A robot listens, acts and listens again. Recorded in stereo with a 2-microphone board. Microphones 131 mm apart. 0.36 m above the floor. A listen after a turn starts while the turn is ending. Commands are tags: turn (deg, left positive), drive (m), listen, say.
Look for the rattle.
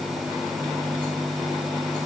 <listen/>
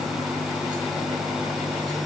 <listen/>
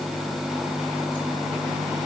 <say>I can't make out a rattle to turn to.</say>